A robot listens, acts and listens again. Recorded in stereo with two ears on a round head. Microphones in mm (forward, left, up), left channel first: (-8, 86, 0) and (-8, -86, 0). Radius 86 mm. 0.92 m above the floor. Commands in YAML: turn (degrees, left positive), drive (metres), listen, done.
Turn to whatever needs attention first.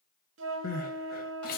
turn: 50
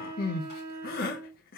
turn: 65
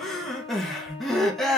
done: "Facing the crying."